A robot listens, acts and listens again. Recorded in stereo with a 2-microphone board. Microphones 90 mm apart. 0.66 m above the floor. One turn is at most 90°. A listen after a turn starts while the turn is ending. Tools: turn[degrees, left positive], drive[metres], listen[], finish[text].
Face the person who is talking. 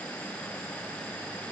Action: listen[]
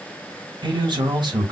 Thought: The man speaking: about 60° right or 120° right.
Action: turn[-60]
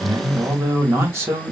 Thought: So it is at 35° right.
Action: turn[-35]
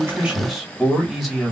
Action: finish[Found it: a man speaking, straight ahead, 1 to 2 m away.]